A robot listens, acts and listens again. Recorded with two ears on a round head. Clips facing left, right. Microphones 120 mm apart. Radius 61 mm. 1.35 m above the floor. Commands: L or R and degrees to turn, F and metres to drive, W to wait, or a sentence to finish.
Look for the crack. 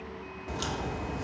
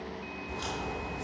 L75
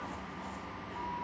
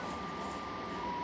W
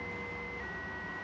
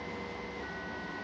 I heard a crack, but can't make it out now. It was about straight ahead or 30° left.